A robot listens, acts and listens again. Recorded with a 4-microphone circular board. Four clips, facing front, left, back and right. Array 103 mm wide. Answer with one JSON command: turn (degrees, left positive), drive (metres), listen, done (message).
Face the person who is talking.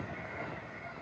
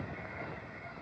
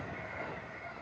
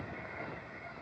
{"listen": true}
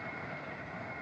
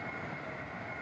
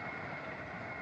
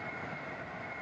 {"listen": true}
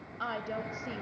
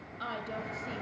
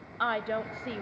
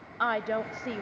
{"turn": -120}
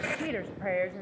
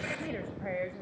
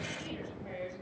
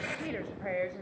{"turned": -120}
{"done": "Facing the woman speaking, 1 to 2 m away."}